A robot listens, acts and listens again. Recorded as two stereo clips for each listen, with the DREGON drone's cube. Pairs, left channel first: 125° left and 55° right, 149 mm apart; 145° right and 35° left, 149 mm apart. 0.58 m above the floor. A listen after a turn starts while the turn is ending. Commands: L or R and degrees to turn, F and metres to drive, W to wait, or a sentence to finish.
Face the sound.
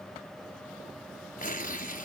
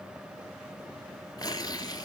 L150
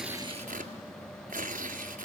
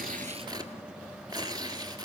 R30
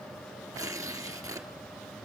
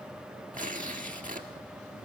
L10
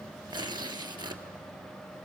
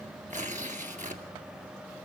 Facing the tearing paper, 1 to 2 m away.